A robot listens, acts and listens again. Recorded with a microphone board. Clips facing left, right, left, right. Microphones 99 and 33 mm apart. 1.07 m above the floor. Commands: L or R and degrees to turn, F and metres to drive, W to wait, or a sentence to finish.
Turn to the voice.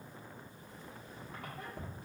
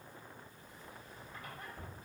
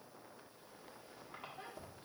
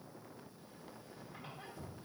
W
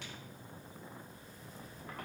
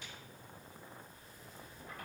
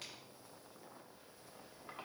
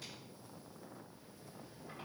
W
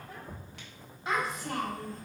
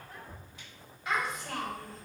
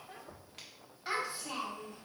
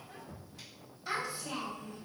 L30
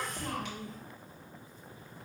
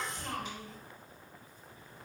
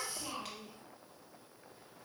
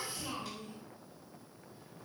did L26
Facing the child speaking.